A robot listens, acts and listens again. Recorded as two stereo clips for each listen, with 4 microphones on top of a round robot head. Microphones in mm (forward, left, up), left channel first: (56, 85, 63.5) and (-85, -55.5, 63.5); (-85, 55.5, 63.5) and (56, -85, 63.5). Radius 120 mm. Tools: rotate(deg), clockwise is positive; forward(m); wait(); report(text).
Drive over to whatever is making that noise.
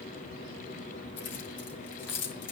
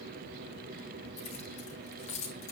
rotate(-75)
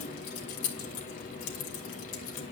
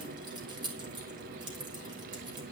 rotate(-25)
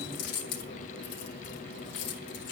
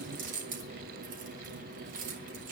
rotate(-10)
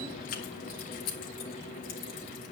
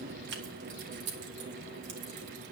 forward(1.0)
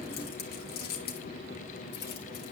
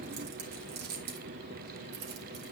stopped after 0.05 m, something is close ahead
report("Blocked. The keys jangling is further on, straight ahead.")